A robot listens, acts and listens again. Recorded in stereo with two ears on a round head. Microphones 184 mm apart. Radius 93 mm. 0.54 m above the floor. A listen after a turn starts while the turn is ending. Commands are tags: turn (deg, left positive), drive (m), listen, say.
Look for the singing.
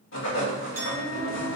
<turn deg="50"/>
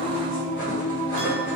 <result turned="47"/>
<turn deg="20"/>
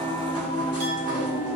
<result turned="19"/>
<turn deg="15"/>
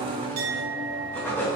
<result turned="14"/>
<turn deg="10"/>
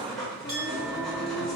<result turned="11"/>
<turn deg="10"/>
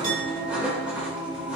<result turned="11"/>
<say>Facing the singing.</say>